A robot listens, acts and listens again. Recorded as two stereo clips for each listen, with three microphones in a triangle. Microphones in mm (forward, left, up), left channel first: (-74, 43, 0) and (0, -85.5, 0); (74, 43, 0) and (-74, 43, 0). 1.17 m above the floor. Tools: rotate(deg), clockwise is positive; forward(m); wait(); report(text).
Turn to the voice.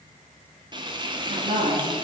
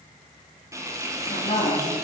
rotate(40)
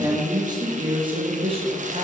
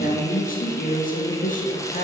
rotate(20)
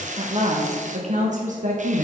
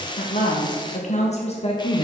rotate(45)
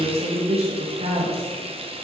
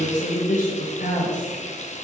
rotate(20)
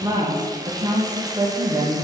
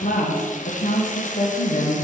report("Found it: a woman speaking, straight ahead, 1 to 2 m away.")